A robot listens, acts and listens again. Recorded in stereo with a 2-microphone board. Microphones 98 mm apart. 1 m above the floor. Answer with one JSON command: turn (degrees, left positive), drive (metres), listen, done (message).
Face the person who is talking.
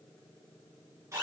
{"listen": true}
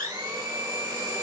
{"listen": true}
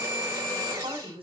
{"turn": -65}
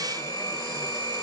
{"listen": true}
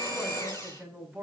{"done": "Facing the woman speaking, over 4 m away."}